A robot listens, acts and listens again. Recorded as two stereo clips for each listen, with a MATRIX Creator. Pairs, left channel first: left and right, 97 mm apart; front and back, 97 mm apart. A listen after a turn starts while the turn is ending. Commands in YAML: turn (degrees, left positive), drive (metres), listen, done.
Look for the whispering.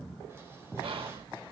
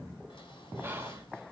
turn: -115
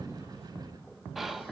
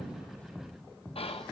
done: "Facing the whispering, 1 to 2 m away."